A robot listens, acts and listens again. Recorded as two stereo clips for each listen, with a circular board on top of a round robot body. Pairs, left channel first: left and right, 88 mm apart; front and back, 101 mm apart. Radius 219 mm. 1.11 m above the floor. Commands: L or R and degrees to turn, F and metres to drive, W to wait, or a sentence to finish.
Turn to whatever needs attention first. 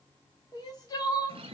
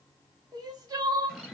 L130
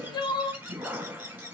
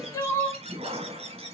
L55
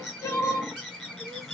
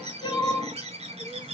L35
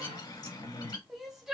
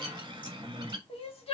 Facing the crying, 1 to 2 m away.